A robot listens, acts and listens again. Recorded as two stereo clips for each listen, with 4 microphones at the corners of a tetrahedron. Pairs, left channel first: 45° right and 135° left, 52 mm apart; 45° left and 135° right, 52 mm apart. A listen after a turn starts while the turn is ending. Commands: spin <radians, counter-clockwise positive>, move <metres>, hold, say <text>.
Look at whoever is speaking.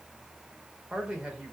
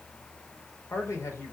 spin 1.05
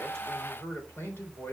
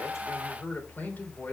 say Found it: a man speaking, straight ahead.